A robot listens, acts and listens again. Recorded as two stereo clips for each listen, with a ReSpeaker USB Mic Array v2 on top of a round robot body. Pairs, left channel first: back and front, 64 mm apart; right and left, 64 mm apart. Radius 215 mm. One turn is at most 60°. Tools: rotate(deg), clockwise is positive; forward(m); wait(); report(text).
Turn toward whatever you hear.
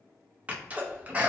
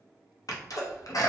rotate(60)
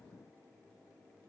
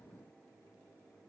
report("I heard a sneeze from this way, but can't make it out now.")